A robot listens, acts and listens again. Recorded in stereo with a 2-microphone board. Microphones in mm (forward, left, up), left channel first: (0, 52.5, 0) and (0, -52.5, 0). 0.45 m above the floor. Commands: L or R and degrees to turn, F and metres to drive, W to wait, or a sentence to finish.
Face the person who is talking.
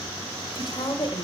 L50
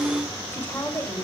L30
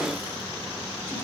W
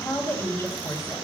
L25
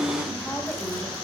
W
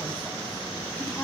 W
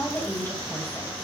L15
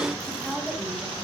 Facing the woman speaking, 2 to 4 m away.